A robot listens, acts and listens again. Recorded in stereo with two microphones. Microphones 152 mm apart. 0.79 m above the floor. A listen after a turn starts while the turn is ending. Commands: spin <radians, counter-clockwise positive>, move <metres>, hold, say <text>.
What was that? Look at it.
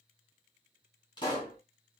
spin 0.52
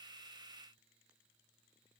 hold
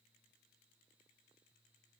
say I heard a pop, but can't make it out now. It was about straight ahead or 120° left.